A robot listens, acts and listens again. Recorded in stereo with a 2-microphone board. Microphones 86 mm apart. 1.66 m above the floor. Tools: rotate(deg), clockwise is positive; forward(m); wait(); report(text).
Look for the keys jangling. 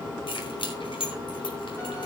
rotate(-75)
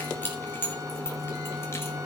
rotate(-25)
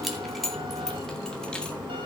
report("Found it: keys jangling, straight ahead.")